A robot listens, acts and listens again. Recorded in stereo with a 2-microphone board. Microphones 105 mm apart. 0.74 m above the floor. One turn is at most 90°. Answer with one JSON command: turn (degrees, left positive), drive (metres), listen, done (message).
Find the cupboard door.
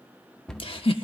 {"turn": 30}
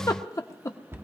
{"turn": -25}
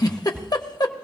{"turn": -20}
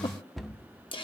{"done": "Found it: a cupboard door, straight ahead."}